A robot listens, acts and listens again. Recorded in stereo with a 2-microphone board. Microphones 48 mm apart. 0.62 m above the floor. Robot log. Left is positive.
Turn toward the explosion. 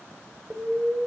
note: The explosion: about 25° right or 155° right.
cmd yaw -25
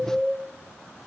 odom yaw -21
end: Facing the explosion, 1 to 2 m away.